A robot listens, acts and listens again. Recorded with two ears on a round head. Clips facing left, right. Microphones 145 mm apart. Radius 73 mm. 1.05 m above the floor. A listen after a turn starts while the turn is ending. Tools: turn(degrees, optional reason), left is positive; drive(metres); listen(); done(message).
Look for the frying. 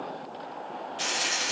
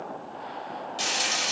turn(degrees=-45, reason="The frying: about 45° right or 135° right.")
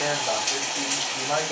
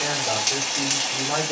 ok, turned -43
turn(degrees=-90, reason="So it is at 90° right.")
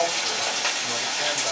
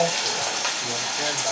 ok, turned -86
done("Facing the frying, 1 to 2 m away.")